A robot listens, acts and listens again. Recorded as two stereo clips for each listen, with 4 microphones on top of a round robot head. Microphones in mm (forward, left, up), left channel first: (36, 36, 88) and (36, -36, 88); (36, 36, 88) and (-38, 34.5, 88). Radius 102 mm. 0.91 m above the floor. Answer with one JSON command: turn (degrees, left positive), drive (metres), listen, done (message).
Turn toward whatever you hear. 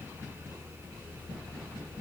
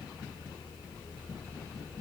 {"listen": true}
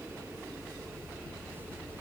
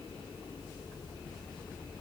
{"listen": true}
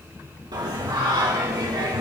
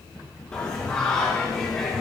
{"turn": -80}
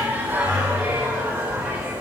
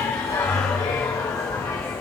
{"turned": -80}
{"turn": -30}
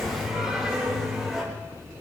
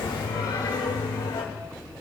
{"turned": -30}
{"done": "Found it: singing, straight ahead."}